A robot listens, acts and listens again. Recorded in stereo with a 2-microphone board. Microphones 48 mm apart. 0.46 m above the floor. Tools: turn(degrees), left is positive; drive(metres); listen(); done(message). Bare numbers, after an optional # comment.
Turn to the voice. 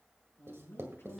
# The man speaking: about 50° left or 130° left.
turn(50)
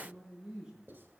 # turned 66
# So it is at 15° right.
turn(-15)
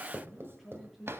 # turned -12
done("Facing the man speaking, over 4 m away.")